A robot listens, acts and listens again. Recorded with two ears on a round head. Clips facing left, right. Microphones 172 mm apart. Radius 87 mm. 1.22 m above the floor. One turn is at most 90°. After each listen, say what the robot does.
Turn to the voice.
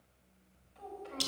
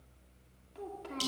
Turn 75° right.
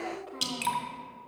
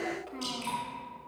Turn 30° right.
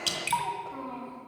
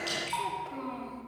Turn 20° right.
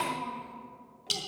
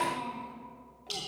Keep listening.
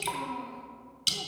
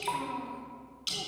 Keep listening.
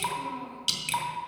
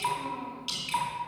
I heard a child speaking from this way, but can't make it out now.